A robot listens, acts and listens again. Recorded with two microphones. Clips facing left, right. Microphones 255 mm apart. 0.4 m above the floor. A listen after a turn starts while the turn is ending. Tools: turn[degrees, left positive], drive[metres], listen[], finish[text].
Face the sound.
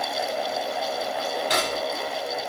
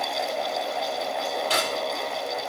Thought: The cutlery clinking: about 15° left or 165° left.
Action: turn[15]
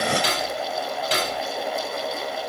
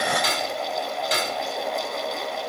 Thought: So it is at 145° left.
Action: turn[145]
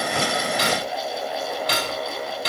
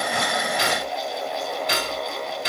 Thought: The cutlery clinking is now 40° left.
Action: turn[40]
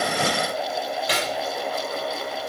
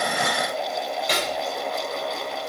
Thought: The cutlery clinking is now 10° left.
Action: turn[10]
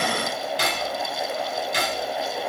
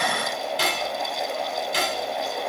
Action: finish[Facing the cutlery clinking, over 4 m away.]